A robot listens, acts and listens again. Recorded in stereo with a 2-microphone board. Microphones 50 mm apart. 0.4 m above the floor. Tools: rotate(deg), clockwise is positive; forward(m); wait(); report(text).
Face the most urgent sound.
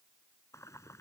wait()
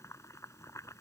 wait()
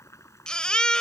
rotate(-20)
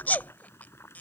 rotate(-140)
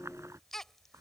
rotate(-10)
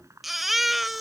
report("Facing the baby crying.")